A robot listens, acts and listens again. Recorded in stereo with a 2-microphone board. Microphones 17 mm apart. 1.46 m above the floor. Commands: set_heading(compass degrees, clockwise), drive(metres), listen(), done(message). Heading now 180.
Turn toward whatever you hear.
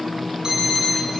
set_heading(215)
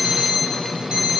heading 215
set_heading(315)
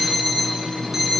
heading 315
set_heading(335)
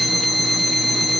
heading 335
done("Facing the alarm clock, 1 to 2 m away.")